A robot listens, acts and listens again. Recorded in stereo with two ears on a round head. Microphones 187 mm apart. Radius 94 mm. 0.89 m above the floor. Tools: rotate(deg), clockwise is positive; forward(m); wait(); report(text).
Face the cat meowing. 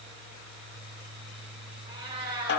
rotate(25)
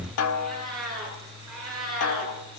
report("Facing the cat meowing.")